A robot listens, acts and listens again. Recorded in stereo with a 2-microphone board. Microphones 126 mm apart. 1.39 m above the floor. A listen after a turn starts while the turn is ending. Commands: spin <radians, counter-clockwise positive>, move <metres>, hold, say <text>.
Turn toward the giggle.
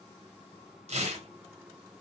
hold
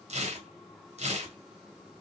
hold
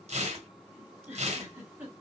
spin -0.26
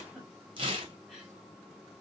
say Facing the giggle, 2 to 4 m away.